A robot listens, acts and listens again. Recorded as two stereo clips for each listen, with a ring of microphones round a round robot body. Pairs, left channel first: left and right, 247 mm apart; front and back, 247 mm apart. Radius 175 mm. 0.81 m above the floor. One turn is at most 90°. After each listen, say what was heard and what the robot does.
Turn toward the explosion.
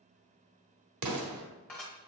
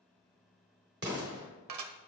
The explosion: 115° right. Turn 90° right.
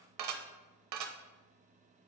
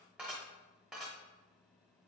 Nothing new. It was at 25° right. Turn 25° right.
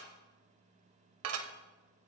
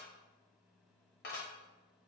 Facing where the explosion came from. I can't hear it now.